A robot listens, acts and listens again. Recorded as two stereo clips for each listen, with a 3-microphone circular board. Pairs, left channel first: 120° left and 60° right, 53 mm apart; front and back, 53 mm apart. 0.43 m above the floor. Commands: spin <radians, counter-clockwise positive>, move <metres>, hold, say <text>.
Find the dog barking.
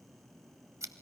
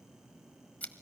hold
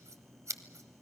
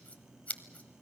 hold
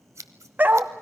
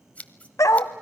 say Found it: a dog barking, straight ahead, under 1 m away.